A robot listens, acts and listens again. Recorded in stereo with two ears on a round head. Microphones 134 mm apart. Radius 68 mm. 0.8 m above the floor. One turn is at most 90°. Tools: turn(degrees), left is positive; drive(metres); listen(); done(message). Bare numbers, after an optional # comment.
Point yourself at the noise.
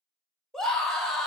turn(30)
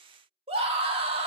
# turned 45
# So it is at 40° right.
turn(-40)
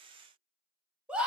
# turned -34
# The scream is now 10° right.
turn(-10)
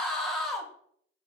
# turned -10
done("Found it: a scream, straight ahead.")